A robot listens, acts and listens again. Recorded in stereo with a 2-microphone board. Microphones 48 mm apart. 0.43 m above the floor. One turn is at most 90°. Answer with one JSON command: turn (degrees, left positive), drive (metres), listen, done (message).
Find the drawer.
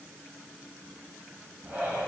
{"listen": true}
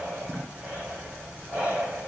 {"listen": true}
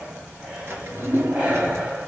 {"turn": -55}
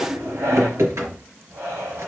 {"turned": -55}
{"turn": -70}
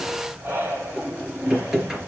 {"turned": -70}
{"turn": -10}
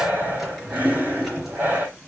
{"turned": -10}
{"done": "Facing the drawer."}